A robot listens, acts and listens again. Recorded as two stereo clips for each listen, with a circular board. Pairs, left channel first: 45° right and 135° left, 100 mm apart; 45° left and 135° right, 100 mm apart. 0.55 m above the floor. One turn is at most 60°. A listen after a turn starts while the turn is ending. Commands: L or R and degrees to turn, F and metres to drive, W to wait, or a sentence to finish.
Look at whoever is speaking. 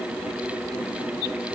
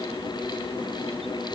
W
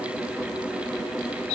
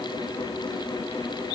W
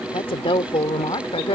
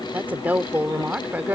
R60
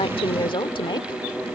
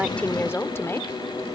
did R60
R20
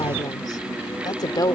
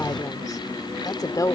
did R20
Found it: a woman speaking, straight ahead.